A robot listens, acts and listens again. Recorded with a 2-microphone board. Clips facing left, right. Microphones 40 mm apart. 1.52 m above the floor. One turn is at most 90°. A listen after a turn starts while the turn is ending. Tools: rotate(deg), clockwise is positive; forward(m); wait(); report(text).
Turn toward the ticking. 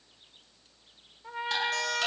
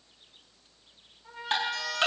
rotate(35)
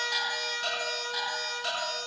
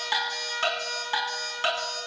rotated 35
rotate(90)
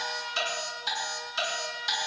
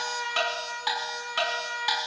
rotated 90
rotate(40)
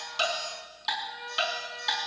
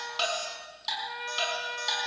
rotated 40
rotate(-20)
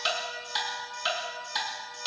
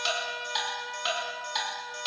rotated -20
report("Found it: ticking, straight ahead.")